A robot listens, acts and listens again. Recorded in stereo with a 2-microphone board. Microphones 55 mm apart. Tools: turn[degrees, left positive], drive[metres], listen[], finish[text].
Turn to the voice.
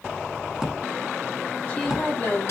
Thought: The woman speaking: about 45° left or 135° left.
Action: turn[45]
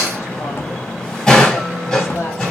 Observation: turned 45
Action: listen[]
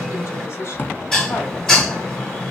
Action: listen[]
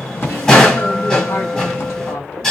Action: finish[I heard a woman speaking, but can't make it out now. It was about straight ahead or 90° left.]